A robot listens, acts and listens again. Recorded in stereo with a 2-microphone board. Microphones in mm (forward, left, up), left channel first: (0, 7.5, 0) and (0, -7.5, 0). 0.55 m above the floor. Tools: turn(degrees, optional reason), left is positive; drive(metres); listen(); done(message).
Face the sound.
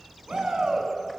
turn(degrees=-90)
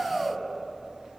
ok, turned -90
done("Found it: a shout, straight ahead.")